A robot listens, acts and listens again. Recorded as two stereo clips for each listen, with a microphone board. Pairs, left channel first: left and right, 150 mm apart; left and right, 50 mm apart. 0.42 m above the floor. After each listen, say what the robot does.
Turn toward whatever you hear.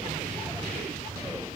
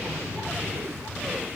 Keep listening.
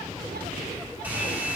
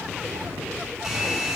Turn 30° right.
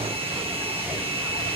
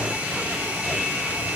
Turn 140° right.
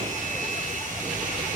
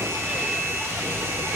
Turn 60° right.
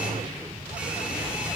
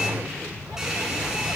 Keep listening.
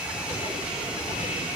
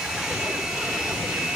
Found it: a hair dryer, straight ahead.